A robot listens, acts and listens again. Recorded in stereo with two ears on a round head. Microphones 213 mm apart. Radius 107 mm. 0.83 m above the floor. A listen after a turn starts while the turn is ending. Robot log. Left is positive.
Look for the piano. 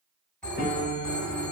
note: The piano: about 40° left or 140° left.
cmd yaw +40
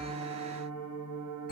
note: So it is at 95° left.
cmd yaw +95
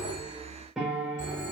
end: Found it: a piano, straight ahead.